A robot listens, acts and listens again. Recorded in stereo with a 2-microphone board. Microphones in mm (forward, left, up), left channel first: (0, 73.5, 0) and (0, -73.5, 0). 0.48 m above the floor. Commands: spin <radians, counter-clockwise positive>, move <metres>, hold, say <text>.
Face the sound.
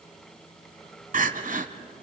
spin -1.13
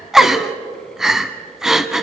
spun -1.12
say Facing the crying, 1 to 2 m away.